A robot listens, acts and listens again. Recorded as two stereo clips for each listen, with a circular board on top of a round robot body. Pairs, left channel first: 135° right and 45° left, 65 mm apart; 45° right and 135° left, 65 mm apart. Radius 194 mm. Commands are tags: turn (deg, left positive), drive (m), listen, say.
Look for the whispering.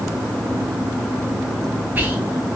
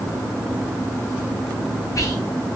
<turn deg="-15"/>
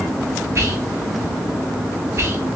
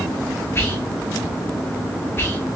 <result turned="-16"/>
<say>Facing the whispering, 1 to 2 m away.</say>